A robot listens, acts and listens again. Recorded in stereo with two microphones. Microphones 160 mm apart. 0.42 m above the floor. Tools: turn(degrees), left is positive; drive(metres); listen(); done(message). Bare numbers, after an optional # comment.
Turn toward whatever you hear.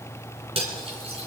# The cutlery clinking: about 40° right or 140° right.
turn(-40)
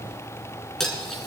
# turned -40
done("Found it: cutlery clinking, straight ahead.")